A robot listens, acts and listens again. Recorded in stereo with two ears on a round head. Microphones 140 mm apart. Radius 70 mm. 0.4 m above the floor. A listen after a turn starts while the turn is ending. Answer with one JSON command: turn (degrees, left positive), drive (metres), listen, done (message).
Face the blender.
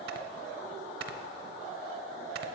{"listen": true}
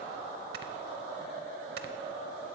{"listen": true}
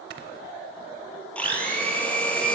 {"turn": 30}
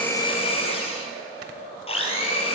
{"turn": 140}
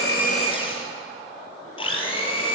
{"turn": 35}
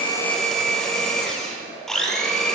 {"done": "Facing the blender, 1 to 2 m away."}